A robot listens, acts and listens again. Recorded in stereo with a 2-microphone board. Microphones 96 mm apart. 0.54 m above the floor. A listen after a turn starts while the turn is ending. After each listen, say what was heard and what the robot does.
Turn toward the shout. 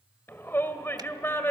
The shout: about 25° left or 155° left. Turn 25° left.
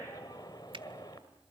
Keep listening.
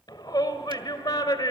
So it is at 130° left. Turn 130° left.
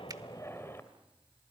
Keep listening.
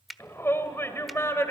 The shout is now 30° left. Turn 30° left.
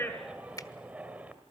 The shout is now 15° right. Turn 15° right.
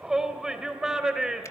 Found it: a shout, straight ahead.